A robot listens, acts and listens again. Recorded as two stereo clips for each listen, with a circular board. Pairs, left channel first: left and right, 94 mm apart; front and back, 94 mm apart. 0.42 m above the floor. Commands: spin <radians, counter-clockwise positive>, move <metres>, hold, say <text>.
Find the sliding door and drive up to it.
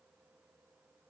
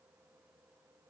hold
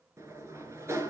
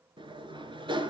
spin -2.62
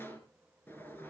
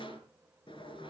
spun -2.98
spin 0.35
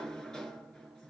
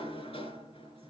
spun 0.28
move 1.0
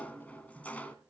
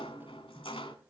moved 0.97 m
spin 0.26
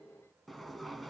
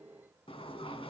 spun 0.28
move 1.0
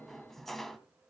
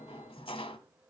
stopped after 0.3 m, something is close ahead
say I am next to the sliding door.